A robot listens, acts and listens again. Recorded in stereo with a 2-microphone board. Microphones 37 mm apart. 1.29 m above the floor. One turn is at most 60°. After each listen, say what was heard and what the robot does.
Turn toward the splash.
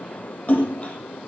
The splash: about 40° left or 140° left. Turn 40° left.
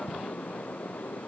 Keep listening.
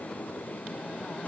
I heard a splash, but can't make it out now. It was about straight ahead or 100° left.